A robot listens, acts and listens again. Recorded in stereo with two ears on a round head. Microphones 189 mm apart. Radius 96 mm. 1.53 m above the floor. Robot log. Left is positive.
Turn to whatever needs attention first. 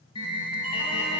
note: The alarm: about 25° left or 155° left.
cmd yaw +25
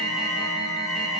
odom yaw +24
end: Facing the alarm.